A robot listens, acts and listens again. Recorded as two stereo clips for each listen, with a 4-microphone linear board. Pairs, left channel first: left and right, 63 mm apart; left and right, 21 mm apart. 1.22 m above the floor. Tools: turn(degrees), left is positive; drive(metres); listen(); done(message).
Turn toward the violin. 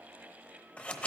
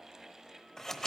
listen()
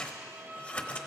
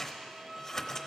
turn(degrees=-35)
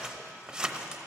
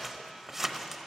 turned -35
listen()
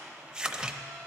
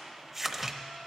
listen()
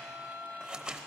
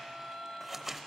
done("Facing the violin.")